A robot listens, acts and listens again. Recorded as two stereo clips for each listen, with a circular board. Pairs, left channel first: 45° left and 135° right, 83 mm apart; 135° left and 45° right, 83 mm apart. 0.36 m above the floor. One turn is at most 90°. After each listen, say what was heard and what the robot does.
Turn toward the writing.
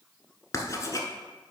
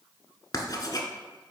The writing: 100° left. Turn 90° left.
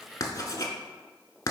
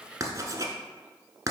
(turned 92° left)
Facing the writing.